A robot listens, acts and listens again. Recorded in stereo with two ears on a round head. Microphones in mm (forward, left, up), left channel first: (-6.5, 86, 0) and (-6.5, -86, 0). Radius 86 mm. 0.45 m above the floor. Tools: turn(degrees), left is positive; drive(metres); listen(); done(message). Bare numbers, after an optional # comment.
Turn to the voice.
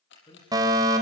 # The man speaking: about 30° left or 150° left.
turn(30)
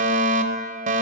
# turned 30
listen()
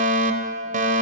listen()
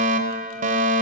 done("I heard a man speaking, but can't make it out now. It was about straight ahead or 120° left.")